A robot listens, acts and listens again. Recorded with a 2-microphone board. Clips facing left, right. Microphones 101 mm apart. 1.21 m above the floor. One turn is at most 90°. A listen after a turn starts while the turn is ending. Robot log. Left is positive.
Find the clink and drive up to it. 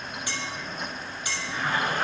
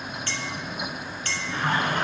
cmd yaw +30
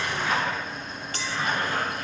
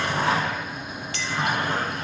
note: So it is at 135° left.
cmd yaw +90
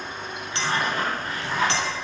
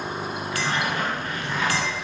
note: Nothing new. It was at 45° left.
cmd yaw +45
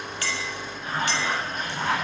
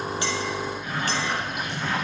cmd idle
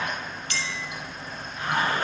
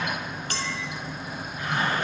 note: The clink is now 45° right.
cmd yaw -45
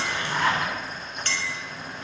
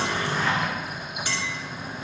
note: The clink is now 10° right.
cmd yaw -10
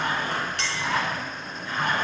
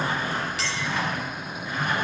cmd fwd 1.0
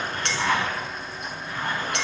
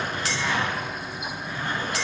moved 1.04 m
cmd fwd 1.0
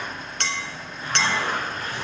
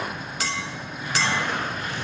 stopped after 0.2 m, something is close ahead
end: I am next to the clink.